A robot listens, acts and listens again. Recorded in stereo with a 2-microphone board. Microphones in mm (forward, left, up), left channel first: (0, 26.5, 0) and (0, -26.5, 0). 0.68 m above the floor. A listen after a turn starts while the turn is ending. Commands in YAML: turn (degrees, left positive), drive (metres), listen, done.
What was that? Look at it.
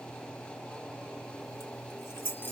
turn: 45
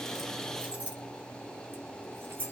turn: -40
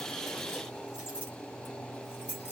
turn: -25
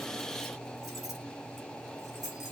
done: "Facing the keys jangling."